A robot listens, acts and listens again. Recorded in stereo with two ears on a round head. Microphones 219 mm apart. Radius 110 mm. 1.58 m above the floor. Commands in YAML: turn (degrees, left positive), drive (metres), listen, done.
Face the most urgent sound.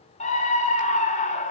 turn: 30
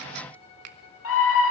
turn: 120
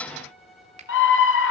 turn: 50
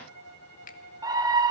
turn: -15
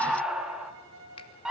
done: "Facing the scream, 2 to 4 m away."